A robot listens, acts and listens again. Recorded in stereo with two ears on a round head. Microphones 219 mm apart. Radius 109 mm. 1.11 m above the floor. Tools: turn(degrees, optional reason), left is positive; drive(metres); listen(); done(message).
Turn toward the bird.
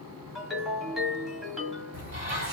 turn(degrees=-35, reason="The bird: about 35° right or 145° right.")
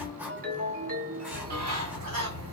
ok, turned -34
turn(degrees=-105, reason="So it is at 105° right.")
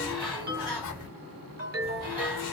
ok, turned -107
done("Facing the bird.")